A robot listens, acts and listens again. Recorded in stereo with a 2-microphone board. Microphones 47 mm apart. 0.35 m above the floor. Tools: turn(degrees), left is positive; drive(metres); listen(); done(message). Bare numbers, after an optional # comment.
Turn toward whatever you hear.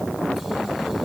listen()
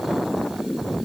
listen()
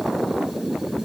done("I can't make out anything to turn to.")